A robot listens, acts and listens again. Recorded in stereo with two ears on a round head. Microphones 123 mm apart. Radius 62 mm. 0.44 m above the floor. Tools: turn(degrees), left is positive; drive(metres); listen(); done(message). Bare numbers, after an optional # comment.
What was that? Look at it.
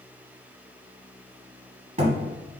# The thud: about 45° right or 135° right.
turn(-45)
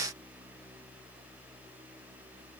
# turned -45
listen()
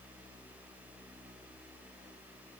done("I heard a thud, but can't make it out now. It was about straight ahead or 90° right.")